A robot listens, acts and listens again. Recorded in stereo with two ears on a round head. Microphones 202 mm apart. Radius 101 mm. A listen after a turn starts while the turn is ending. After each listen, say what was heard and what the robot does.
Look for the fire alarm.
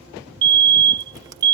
The fire alarm: about 50° right or 130° right. Turn 50° right.
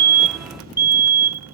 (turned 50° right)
So it is at 10° right. Turn 10° right.
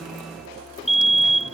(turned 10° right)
Found it: a fire alarm, straight ahead.